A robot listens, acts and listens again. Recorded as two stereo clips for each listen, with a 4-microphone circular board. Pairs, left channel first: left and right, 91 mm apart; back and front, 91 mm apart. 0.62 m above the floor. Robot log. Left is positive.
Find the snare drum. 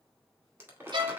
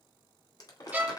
cmd idle
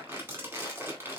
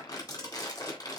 cmd idle
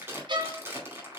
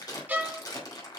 end: I can't make out a snare drum to turn to.